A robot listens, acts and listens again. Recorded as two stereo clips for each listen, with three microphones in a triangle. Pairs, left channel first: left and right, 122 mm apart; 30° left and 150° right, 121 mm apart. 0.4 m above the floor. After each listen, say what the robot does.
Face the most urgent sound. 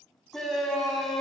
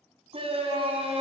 Turn 180° left.
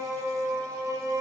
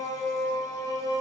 Turn 30° right.
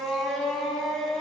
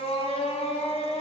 Facing the shout, 2 to 4 m away.